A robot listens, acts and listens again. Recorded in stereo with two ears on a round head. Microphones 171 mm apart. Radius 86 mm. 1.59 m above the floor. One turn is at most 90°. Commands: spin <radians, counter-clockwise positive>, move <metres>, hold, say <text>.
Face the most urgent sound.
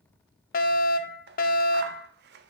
spin 0.87
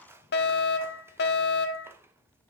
spin 1.22
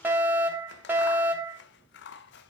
spin -0.17
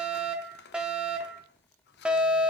say Found it: a fire alarm, straight ahead.